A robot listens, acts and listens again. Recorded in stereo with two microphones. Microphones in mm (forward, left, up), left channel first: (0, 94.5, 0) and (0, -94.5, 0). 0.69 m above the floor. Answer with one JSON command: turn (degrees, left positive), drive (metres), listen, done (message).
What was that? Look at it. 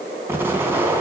{"turn": -30}
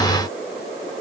{"listen": true}
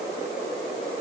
{"done": "I heard an explosion, but can't make it out now. It was about 20° left or 140° right."}